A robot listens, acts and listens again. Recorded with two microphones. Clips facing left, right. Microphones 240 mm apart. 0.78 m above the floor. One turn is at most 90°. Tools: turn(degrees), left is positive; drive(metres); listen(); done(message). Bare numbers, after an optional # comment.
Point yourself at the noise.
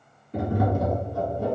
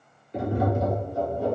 # The tapping: about 65° left or 115° left.
turn(65)
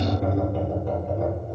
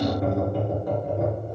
done("Found it: tapping, straight ahead.")